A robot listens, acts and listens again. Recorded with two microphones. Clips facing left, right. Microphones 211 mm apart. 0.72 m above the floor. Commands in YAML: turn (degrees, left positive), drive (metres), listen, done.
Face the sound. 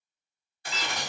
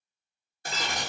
turn: -45
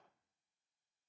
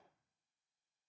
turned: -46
listen: true
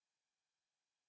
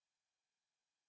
done: "I heard breaking glass, but can't make it out now. It was about straight ahead or 90° right."